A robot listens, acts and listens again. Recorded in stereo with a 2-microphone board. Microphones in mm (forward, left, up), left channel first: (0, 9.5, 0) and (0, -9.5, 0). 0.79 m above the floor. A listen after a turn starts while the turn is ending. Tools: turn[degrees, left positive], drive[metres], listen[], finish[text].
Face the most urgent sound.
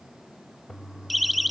Action: turn[30]
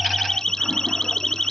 Thought: So it is at 150° left.
Action: turn[150]
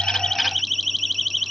Action: finish[Facing the siren.]